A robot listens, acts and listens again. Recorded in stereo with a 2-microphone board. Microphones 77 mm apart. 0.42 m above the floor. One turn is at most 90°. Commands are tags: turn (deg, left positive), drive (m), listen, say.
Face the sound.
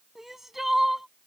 <turn deg="-30"/>
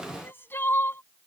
<turn deg="30"/>
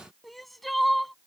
<say>Facing the crying.</say>